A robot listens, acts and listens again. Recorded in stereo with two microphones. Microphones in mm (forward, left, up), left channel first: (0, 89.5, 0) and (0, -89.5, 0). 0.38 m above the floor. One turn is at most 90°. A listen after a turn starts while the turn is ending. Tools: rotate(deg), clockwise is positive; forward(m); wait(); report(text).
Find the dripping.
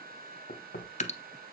rotate(-40)
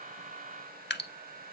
rotate(-90)
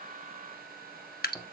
rotate(-60)
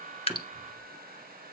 wait()
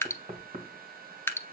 rotate(-15)
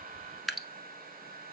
report("Facing the dripping, under 1 m away.")